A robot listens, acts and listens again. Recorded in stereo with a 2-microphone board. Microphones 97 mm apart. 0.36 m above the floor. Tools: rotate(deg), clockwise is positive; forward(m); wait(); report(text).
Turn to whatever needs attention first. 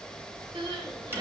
rotate(55)
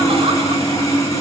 wait()
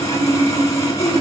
wait()
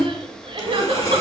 rotate(65)
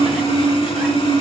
wait()
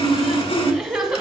rotate(10)
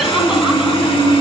wait()
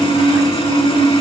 wait()
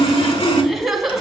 report("Facing the crying, 1 to 2 m away.")